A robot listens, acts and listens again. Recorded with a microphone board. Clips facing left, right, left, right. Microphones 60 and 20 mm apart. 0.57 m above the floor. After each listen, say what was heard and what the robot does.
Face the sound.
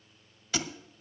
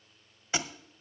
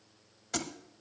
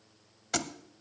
The thud: about 25° right or 155° right. Turn 25° right.
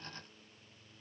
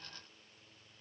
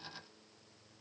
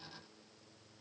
Keep listening.
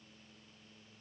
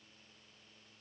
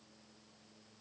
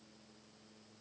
I heard a thud, but can't make it out now. It was about straight ahead or 130° right.